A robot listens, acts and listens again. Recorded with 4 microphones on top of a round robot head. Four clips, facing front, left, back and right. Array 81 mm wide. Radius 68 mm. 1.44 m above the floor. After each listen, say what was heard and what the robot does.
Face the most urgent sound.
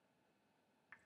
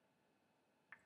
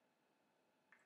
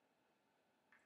Keep listening.
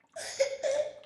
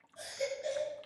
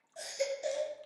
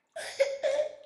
The baby crying: 70° right. Turn 70° right.
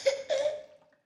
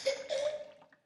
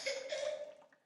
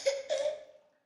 The baby crying is now 20° right. Turn 20° right.
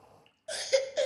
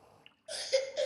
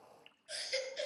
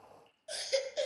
Facing the baby crying.